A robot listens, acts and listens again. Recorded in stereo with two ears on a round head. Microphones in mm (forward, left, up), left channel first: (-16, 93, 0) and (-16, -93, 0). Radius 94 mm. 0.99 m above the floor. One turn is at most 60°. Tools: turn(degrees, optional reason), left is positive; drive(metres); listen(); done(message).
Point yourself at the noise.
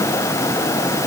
listen()
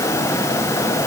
listen()
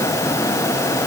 done("I can't make out anything to turn to.")